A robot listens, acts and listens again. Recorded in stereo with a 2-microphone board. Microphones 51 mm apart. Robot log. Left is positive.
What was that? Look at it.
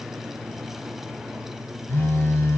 note: The phone buzzing: about 50° left or 130° left.
cmd yaw +50
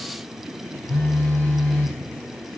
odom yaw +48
note: So it is at 65° left.
cmd yaw +65
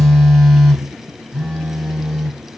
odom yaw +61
end: Found it: a phone buzzing, straight ahead.